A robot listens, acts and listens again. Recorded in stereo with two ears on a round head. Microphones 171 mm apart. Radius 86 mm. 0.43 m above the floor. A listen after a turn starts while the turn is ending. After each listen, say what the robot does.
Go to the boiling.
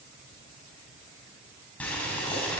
Turn 30° left.
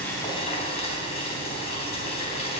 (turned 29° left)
Turn 145° left.
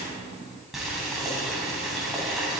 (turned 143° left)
Drive 1.0 m forward.
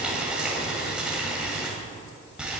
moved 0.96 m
Drive 1.0 m forward.
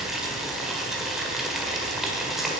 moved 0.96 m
Drive 1.0 m forward.
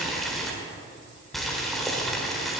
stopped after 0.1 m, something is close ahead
I am next to the boiling.